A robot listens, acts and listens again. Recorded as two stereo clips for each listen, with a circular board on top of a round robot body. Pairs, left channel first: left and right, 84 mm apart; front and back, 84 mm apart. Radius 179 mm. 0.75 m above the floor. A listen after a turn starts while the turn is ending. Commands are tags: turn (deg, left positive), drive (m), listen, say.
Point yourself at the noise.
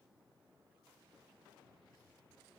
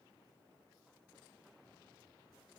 <listen/>
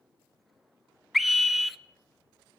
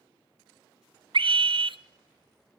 <turn deg="180"/>
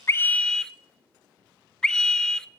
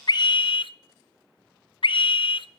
<turn deg="10"/>
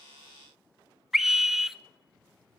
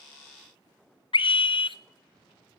<say>Found it: a scream, straight ahead, under 1 m away.</say>